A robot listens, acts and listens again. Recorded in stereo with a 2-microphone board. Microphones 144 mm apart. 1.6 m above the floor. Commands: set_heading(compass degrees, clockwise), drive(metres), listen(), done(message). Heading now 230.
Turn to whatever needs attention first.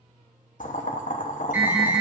set_heading(260)
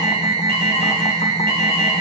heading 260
set_heading(40)
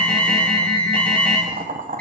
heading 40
set_heading(30)
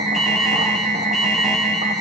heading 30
done("Found it: an alarm, straight ahead.")